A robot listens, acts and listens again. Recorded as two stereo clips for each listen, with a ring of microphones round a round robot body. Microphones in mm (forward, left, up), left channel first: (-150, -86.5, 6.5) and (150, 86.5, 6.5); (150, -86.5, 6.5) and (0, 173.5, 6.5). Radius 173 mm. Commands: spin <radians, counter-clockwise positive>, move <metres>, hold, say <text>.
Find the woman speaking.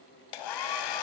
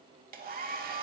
hold
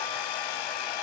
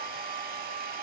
hold
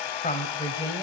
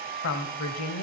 spin -1.22
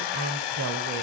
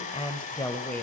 spin 0.26
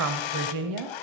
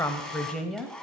spin 0.52
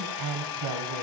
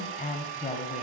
spin 0.17
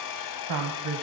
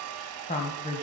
say Found it: a woman speaking, straight ahead, 1 to 2 m away.